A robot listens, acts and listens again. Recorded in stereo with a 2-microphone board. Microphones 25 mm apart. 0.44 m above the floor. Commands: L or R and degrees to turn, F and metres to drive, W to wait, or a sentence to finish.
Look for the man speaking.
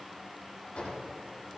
W
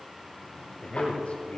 L60
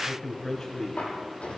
L25
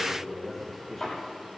L10
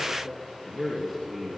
Facing the man speaking, 2 to 4 m away.